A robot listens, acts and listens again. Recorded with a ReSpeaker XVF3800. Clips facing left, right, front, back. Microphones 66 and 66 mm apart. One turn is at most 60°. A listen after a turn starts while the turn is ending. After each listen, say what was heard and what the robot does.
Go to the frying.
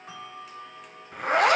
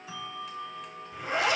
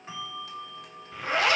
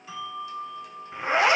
Keep listening.
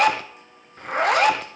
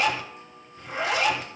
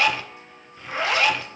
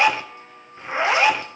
Keep listening.
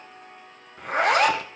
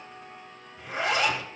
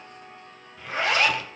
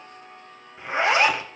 I can't make out frying, only a zipper and a bell.